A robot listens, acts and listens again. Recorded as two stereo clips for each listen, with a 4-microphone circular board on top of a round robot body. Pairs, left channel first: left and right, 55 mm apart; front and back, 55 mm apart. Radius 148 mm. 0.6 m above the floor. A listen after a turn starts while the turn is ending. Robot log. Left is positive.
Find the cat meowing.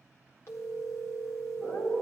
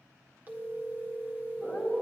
note: The cat meowing: 90° left.
cmd yaw +90
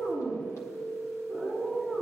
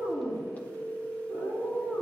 note: The cat meowing is now 30° left.
cmd yaw +30
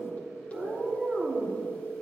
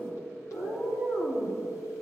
end: Facing the cat meowing, over 4 m away.